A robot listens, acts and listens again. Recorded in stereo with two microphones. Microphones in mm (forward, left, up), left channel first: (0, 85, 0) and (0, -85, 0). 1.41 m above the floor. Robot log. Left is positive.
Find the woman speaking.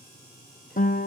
cmd idle
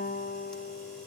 cmd idle
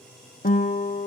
end: I can't make out a woman speaking, only a guitar.